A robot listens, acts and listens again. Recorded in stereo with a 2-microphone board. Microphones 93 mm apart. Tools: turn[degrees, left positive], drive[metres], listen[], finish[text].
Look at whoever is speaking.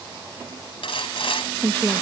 Thought: The woman speaking: about 15° left or 165° left.
Action: turn[15]
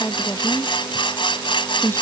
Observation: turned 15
Thought: So it is at 150° left.
Action: turn[150]
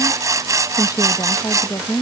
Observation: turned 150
Thought: The woman speaking is now 45° left.
Action: turn[45]
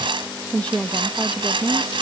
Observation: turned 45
Thought: The woman speaking is now 15° left.
Action: turn[15]
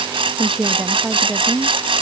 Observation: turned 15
Action: finish[Found it: a woman speaking, straight ahead.]